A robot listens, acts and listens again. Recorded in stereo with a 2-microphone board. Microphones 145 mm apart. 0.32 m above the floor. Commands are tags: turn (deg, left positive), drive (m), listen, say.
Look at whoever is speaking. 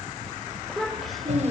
<turn deg="30"/>
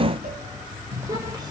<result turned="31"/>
<listen/>
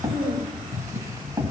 <turn deg="-25"/>
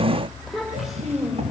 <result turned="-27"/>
<say>Found it: a child speaking, straight ahead, over 4 m away.</say>